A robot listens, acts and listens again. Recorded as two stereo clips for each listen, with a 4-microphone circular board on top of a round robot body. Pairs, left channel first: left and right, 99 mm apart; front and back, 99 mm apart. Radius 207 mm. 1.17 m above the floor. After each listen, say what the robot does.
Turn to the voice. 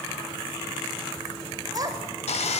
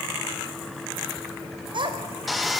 Turn 140° right.
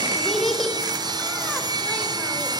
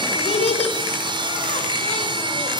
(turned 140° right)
Facing the child speaking, over 4 m away.